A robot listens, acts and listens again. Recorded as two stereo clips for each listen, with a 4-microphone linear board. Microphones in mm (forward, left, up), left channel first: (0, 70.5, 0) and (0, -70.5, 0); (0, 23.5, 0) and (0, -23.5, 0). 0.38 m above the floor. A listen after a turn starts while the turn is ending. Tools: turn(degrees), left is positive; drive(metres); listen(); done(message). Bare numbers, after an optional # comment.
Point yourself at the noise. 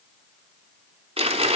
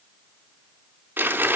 # The crumpling: about 40° right or 140° right.
turn(-40)
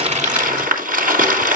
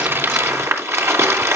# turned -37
# So it is at 105° right.
turn(-105)
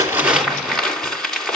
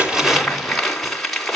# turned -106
done("Found it: crumpling, straight ahead, 2 to 4 m away.")